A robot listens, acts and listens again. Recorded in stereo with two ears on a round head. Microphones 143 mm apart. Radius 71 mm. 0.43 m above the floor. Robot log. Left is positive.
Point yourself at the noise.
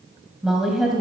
cmd yaw +30
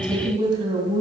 note: So it is at 30° right.
cmd yaw -30
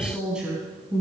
end: Facing the woman speaking.